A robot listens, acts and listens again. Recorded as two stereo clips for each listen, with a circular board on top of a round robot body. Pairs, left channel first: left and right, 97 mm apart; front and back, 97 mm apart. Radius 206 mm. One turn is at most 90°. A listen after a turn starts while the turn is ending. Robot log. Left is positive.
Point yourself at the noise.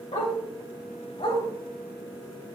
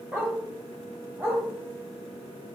note: The dog barking: 110° left.
cmd yaw +90
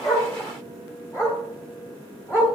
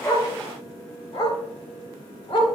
note: The dog barking is now 30° left.
cmd yaw +30
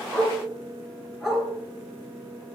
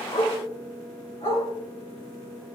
end: Facing the dog barking, over 4 m away.